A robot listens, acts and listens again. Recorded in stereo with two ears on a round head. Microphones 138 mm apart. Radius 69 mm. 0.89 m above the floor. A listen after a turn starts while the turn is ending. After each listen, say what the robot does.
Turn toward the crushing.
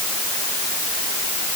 Keep listening.
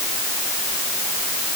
Keep listening.
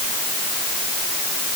I can't make out crushing to turn to.